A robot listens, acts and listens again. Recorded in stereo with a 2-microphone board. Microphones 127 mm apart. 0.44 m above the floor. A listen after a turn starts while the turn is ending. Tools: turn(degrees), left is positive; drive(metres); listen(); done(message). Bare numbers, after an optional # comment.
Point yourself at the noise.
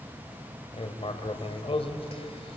# The writing: about 50° left or 130° left.
turn(50)
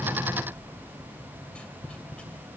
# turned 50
# So it is at 10° left.
turn(10)
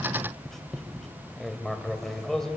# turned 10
done("Found it: writing, straight ahead, 2 to 4 m away.")